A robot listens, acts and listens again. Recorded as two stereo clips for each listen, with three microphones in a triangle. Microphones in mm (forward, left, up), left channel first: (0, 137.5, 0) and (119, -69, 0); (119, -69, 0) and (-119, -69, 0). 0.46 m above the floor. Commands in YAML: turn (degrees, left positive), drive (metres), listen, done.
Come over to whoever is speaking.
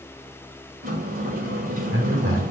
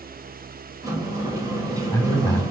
turn: -70
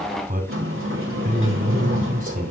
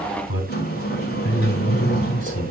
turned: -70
drive: 1.0
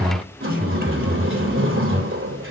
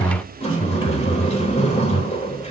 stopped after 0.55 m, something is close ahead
turn: -15
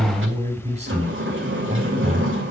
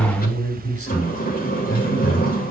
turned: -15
done: "Blocked. The man speaking is further on, straight ahead."